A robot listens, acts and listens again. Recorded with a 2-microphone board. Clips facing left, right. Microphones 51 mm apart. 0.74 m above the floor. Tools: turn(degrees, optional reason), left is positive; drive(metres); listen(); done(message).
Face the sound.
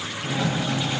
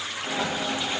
turn(degrees=-20, reason="The sliding door: about 20° right or 160° right.")
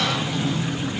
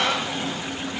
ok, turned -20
turn(degrees=-135, reason="So it is at 135° right.")
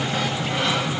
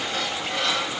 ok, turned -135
turn(degrees=20, reason="The sliding door is now 20° left.")
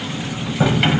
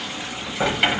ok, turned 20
done("Facing the sliding door.")